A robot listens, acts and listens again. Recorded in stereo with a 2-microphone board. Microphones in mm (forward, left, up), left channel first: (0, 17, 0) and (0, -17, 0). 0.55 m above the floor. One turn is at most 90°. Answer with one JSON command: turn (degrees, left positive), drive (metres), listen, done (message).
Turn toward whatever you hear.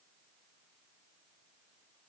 {"listen": true}
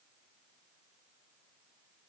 {"listen": true}
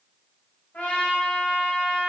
{"turn": 45}
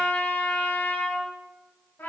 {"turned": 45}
{"turn": 85}
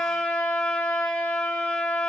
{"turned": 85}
{"turn": 25}
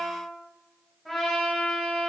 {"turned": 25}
{"done": "Found it: a trumpet, straight ahead."}